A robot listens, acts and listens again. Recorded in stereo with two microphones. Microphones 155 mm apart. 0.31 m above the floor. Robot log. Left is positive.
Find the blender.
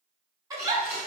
note: The blender: about 50° left or 130° left.
cmd yaw +50
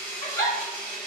note: So it is at 80° left.
cmd yaw +80
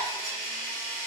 note: The blender is now 10° left.
cmd yaw +10
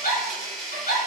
end: Found it: a blender, straight ahead.